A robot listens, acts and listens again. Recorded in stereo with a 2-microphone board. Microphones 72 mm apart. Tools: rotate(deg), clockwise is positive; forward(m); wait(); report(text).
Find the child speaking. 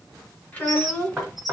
rotate(-30)
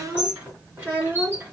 rotate(30)
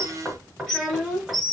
report("Found it: a child speaking, straight ahead, 2 to 4 m away.")